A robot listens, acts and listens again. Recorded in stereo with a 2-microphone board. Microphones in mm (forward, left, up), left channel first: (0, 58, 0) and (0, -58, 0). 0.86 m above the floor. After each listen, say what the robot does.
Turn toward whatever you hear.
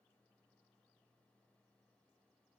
Keep listening.
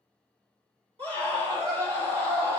Turn 55° right.
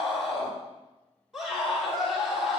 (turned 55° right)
Found it: a scream, straight ahead.